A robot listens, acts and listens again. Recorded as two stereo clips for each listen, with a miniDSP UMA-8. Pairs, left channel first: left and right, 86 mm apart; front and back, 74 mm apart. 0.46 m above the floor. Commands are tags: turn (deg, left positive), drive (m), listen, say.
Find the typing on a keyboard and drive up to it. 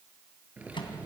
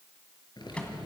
<turn deg="-15"/>
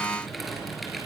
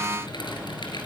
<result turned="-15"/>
<drive m="1.0"/>
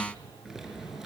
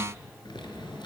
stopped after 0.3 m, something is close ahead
<say>Something is in my way. I am facing the typing on a keyboard but have not reached it.</say>